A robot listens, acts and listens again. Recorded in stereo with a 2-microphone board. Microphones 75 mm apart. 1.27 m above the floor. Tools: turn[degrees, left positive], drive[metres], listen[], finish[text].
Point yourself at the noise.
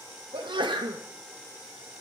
Action: turn[-90]
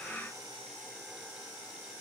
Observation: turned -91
Action: finish[Facing where the sneeze came from. I can't hear it now.]